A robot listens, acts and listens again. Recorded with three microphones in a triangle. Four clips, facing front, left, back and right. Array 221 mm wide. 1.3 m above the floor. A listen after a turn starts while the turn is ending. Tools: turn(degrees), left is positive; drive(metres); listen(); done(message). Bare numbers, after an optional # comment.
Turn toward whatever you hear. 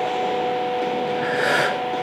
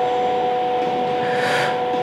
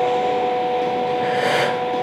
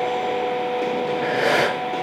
# The breathing: 75° right.
turn(-75)
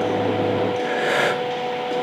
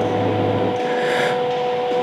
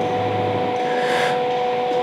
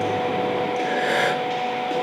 done("Facing the breathing.")